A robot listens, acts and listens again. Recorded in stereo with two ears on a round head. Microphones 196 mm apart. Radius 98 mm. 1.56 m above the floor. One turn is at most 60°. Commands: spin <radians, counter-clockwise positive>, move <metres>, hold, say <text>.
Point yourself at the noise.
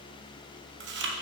spin -0.96
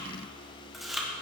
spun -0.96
say Found it: chewing, straight ahead.